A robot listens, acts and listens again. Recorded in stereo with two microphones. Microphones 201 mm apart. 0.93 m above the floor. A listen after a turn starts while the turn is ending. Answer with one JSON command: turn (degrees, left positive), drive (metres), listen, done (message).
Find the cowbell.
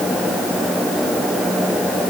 {"listen": true}
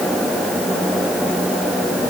{"listen": true}
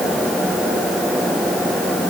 {"done": "I can't make out a cowbell to turn to."}